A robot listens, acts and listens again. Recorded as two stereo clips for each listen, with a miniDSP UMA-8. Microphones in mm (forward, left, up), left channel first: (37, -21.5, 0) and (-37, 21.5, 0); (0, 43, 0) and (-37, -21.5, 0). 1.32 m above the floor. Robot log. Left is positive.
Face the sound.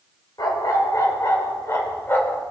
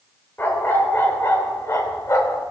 note: The dog barking: 30° left.
cmd yaw +30
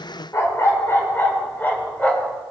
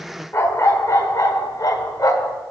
note: The dog barking is now 40° left.
cmd yaw +40
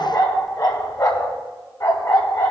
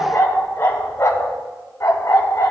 note: The dog barking is now 15° left.
cmd yaw +15
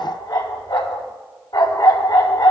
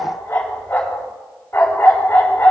end: Found it: a dog barking, straight ahead.